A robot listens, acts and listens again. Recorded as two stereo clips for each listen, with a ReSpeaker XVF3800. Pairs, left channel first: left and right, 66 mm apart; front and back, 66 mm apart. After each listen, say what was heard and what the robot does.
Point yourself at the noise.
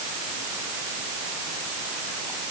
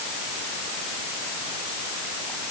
Keep listening.
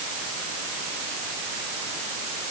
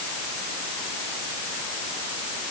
Keep listening.
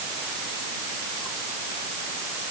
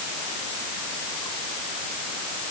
I can't make out anything.